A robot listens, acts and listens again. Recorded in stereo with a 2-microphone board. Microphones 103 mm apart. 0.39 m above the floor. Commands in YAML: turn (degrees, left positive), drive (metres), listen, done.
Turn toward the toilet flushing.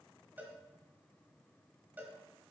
listen: true
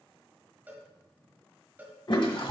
turn: 50
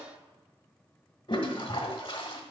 turn: 65
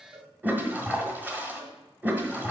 turn: -20
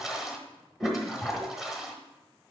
done: "Facing the toilet flushing, 1 to 2 m away."